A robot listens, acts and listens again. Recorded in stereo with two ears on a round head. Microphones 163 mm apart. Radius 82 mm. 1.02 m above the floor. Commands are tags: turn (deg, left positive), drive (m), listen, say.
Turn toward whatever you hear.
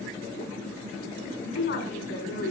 <turn deg="75"/>
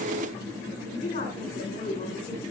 <turn deg="35"/>
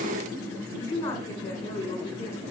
<turn deg="15"/>
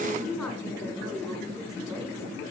<say>Found it: a woman speaking, straight ahead.</say>